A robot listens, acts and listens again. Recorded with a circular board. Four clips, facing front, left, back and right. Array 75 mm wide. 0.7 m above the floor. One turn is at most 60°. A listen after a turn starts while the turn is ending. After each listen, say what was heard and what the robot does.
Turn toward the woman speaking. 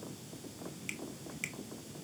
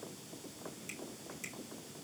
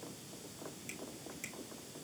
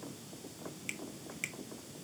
Keep listening.
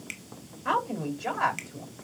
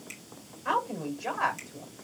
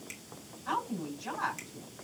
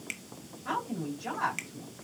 The woman speaking: 25° left. Turn 25° left.
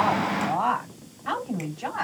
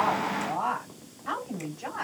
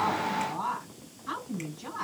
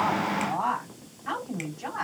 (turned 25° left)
Facing the woman speaking, over 4 m away.